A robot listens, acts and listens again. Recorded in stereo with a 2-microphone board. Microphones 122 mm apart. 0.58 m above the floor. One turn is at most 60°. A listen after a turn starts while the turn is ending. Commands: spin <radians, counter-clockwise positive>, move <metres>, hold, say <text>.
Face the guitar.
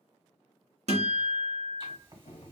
spin -1.05
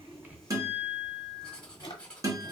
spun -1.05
spin -0.52
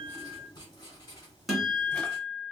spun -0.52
say Facing the guitar.